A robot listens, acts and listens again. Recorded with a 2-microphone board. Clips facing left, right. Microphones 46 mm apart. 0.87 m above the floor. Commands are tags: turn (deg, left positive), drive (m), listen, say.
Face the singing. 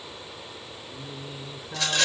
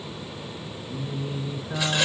<turn deg="-50"/>
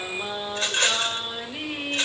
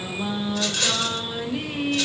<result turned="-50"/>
<turn deg="10"/>
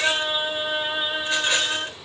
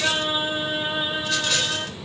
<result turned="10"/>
<turn deg="10"/>
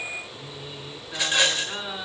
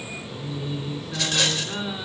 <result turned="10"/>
<say>Found it: singing, straight ahead.</say>